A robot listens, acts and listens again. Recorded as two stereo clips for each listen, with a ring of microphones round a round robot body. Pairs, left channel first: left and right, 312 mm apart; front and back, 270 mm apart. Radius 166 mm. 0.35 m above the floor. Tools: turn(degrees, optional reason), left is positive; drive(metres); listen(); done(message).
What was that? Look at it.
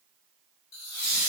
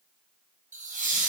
turn(degrees=125, reason="The laughter: 125° left.")
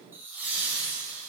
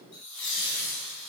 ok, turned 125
done("Found it: laughter, straight ahead.")